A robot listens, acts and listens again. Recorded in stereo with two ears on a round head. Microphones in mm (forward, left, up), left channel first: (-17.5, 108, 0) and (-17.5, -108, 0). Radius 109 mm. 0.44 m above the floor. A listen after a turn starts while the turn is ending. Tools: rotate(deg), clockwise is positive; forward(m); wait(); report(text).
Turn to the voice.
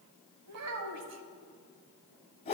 rotate(70)
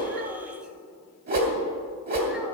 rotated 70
wait()
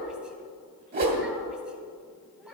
report("Found it: a child speaking, straight ahead, 1 to 2 m away.")